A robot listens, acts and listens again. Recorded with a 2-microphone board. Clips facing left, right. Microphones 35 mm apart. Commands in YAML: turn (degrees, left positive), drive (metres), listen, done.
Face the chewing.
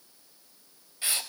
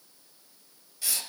listen: true
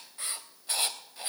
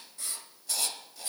listen: true
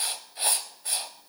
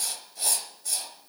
done: "I can't make out chewing to turn to."